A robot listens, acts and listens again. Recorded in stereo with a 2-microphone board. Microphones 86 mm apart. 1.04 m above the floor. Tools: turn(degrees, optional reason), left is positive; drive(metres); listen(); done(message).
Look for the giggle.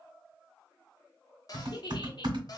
turn(degrees=55, reason="The giggle: about 55° left or 125° left.")
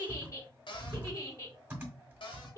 turn(degrees=40, reason="So it is at 40° left.")
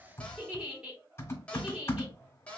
turn(degrees=-20, reason="The giggle is now 20° right.")
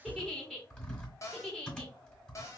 done("Facing the giggle, 1 to 2 m away.")